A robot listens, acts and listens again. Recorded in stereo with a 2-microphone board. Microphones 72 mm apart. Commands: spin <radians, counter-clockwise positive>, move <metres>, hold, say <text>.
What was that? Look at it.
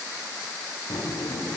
spin 1.57
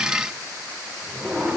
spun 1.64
say Found it: a drawer, straight ahead.